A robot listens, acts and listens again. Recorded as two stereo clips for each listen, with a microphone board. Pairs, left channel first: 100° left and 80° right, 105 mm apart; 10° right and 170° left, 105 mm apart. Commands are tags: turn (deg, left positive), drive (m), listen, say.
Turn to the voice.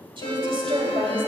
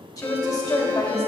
<turn deg="-60"/>
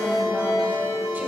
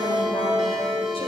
<listen/>
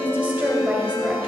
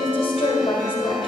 <turn deg="-10"/>
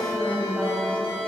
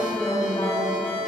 <listen/>
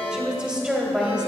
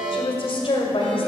<say>Found it: a woman speaking, straight ahead.</say>